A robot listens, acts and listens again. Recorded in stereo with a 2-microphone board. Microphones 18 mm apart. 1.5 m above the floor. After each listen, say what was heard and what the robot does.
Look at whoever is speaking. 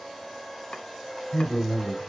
The man speaking: about 15° left or 165° left. Turn 15° left.
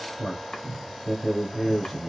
Facing the man speaking, 2 to 4 m away.